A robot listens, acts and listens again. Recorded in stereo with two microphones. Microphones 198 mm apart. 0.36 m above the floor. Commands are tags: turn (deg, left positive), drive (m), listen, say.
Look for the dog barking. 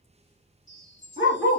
<turn deg="90"/>
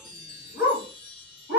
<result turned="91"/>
<turn deg="-15"/>
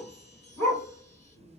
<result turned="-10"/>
<say>Found it: a dog barking, straight ahead, 1 to 2 m away.</say>